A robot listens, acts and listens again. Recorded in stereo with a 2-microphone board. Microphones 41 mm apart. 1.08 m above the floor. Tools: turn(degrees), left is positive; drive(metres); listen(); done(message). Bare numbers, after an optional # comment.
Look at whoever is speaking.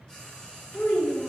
# The child speaking: about 60° left or 120° left.
turn(60)
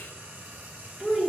done("Facing the child speaking.")